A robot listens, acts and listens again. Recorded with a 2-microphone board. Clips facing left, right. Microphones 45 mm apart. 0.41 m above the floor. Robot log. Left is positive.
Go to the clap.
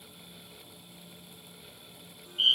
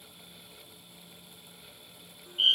cmd idle
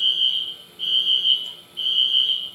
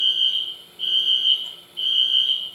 cmd idle
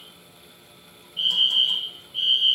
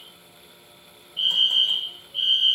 end: I can't make out a clap, only a fire alarm.